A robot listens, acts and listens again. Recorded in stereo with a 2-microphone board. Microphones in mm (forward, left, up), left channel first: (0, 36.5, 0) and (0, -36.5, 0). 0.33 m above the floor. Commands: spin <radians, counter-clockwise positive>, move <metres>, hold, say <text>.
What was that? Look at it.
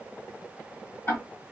spin 0.52
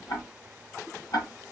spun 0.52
spin 2.01
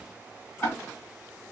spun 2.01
spin 0.52
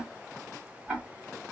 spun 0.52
spin -0.26
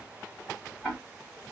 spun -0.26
say Facing the ticking, 1 to 2 m away.